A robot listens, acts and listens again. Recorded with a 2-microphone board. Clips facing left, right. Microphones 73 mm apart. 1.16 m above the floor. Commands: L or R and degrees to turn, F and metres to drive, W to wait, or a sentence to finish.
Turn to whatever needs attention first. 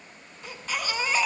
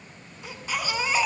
R30
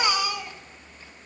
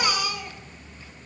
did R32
L25
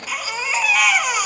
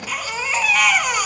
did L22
Facing the baby crying.